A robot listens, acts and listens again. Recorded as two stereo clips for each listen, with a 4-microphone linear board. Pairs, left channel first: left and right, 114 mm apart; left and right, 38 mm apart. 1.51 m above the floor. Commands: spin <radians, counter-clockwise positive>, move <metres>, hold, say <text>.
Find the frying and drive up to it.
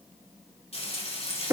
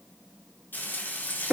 spin 1.05
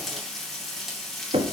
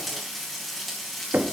move 1.0
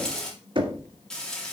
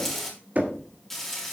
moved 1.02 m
move 1.0
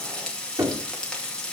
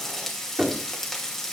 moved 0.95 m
move 1.0
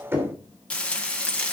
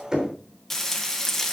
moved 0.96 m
spin 0.17
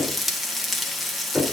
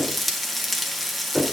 move 1.0
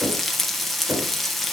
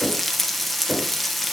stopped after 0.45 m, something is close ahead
say I am next to the frying.